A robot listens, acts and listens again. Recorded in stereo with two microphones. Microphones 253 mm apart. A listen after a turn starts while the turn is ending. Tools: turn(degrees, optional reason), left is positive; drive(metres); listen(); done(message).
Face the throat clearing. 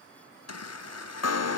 listen()
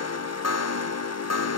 listen()
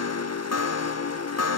done("I can't make out throat clearing to turn to.")